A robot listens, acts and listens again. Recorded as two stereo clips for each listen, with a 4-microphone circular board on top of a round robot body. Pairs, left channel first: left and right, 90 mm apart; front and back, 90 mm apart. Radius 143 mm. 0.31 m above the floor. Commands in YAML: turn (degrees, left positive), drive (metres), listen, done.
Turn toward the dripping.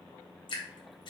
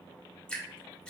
turn: 75
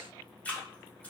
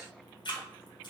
turn: 15
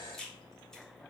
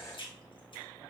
done: "Facing the dripping."